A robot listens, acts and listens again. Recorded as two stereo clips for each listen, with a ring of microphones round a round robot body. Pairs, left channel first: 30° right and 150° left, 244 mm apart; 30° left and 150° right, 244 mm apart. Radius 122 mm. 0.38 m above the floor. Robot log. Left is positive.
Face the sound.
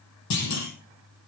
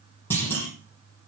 note: The clunk: 50° right.
cmd yaw -50
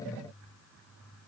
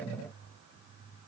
end: I heard a clunk from this way, but can't make it out now.